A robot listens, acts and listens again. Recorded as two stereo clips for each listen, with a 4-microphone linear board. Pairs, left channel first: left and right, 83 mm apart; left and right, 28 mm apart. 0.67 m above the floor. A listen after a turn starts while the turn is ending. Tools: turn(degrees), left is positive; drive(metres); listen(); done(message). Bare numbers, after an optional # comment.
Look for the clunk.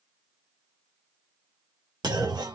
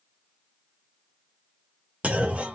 # The clunk: about 60° right or 120° right.
turn(-60)
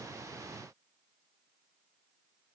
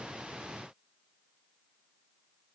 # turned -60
listen()
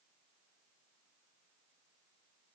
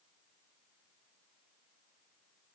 done("I heard a clunk, but can't make it out now. It was about straight ahead or 60° right.")